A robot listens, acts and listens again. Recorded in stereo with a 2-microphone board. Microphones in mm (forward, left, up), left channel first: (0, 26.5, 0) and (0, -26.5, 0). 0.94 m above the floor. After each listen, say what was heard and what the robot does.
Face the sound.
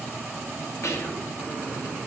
The whispering: about 60° left or 120° left. Turn 60° left.
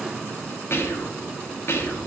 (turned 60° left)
So it is at 55° left. Turn 55° left.
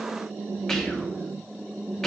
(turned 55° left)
The whispering is now 10° left. Turn 10° left.
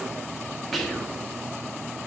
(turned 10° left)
Facing the whispering.